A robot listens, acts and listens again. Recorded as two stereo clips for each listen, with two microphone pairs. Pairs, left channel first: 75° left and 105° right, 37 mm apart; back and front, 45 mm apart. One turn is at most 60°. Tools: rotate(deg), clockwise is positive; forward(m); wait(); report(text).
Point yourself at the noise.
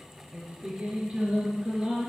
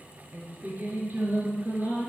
rotate(45)
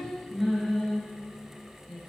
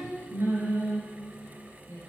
rotate(10)
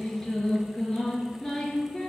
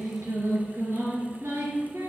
report("Facing the singing, 2 to 4 m away.")